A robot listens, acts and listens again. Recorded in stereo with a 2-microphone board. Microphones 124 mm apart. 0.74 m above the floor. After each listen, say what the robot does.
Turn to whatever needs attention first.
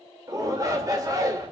Turn 30° right.
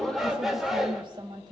Facing the shout.